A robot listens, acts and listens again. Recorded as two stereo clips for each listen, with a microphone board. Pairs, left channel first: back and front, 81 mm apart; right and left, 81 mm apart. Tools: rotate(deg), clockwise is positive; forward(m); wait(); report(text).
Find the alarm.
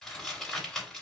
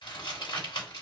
wait()
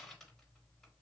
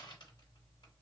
wait()
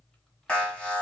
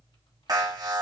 rotate(-105)
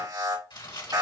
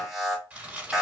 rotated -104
report("Facing the alarm, 1 to 2 m away.")